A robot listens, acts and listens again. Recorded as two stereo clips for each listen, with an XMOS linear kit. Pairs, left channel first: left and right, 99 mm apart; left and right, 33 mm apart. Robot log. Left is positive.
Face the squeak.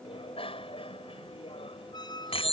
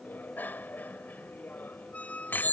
note: The squeak: about 45° left or 135° left.
cmd yaw +45
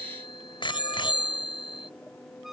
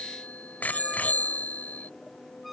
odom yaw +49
cmd idle
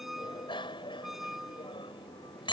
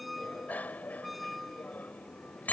end: Found it: a squeak, straight ahead.